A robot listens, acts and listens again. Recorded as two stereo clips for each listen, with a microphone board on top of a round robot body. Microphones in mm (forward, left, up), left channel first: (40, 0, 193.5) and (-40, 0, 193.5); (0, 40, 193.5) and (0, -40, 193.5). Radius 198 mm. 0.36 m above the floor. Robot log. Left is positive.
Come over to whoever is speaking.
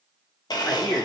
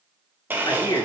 note: The man speaking: 55° left.
cmd yaw +55
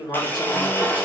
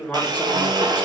note: The man speaking is now 20° left.
cmd yaw +20
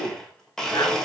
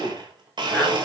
cmd fwd 1.0
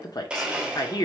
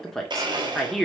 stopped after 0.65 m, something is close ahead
end: Arrived at the man speaking, straight ahead.